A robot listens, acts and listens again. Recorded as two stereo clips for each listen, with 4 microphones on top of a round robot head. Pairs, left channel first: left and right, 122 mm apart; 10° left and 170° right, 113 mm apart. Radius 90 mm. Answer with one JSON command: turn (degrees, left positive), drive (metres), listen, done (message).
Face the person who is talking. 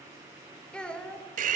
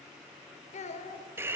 {"turn": 10}
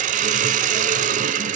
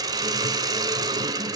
{"listen": true}
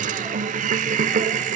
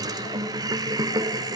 {"listen": true}
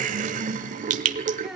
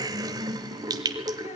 {"done": "I heard a child speaking from this way, but can't make it out now."}